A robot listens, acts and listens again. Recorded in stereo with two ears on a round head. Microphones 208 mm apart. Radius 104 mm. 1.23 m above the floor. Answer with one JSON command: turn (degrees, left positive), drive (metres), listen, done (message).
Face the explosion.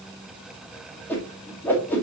{"listen": true}
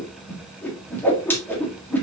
{"listen": true}
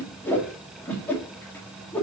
{"done": "I can't make out an explosion, only a whoosh."}